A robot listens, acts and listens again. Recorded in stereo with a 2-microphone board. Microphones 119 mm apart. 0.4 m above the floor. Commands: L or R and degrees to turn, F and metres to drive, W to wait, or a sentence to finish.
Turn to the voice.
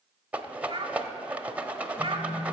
R50
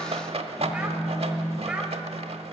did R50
W
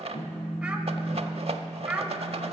R10
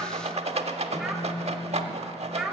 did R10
Facing the child speaking, 1 to 2 m away.